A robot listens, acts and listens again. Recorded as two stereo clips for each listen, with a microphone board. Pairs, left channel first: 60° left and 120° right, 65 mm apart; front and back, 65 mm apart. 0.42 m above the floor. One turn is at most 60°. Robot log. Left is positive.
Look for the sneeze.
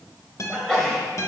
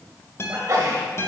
note: The sneeze: 145° left.
cmd yaw +60
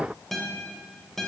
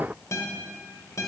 note: Nothing new. It was at 85° left.
cmd yaw +60
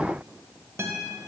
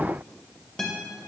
note: Nothing new. It was at 25° left.
cmd yaw +25
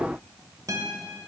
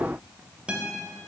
end: I heard a sneeze from this way, but can't make it out now.